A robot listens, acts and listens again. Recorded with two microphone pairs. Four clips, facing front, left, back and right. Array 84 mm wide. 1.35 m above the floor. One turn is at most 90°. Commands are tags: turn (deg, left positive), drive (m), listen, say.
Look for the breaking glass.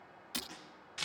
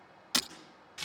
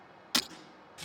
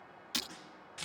<turn deg="90"/>
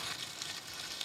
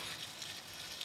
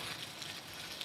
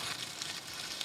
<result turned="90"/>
<turn deg="50"/>
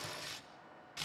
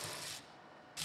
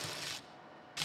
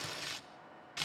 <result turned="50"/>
<say>I heard breaking glass from this way, but can't make it out now.</say>